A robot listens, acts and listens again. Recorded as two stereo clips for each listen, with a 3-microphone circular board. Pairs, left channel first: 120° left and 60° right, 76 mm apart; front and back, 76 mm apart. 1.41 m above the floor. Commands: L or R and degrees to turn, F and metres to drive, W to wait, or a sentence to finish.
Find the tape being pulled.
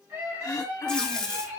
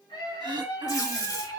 L40
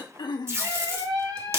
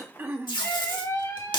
Facing the tape being pulled, 1 to 2 m away.